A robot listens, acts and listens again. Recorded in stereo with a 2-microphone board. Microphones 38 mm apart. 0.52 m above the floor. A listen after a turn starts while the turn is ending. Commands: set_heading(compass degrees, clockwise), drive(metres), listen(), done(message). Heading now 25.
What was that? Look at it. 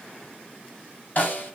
set_heading(340)
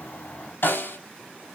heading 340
set_heading(255)
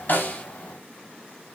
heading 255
listen()
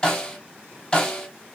set_heading(230)
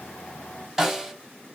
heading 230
done("Found it: a snare drum, straight ahead, 2 to 4 m away.")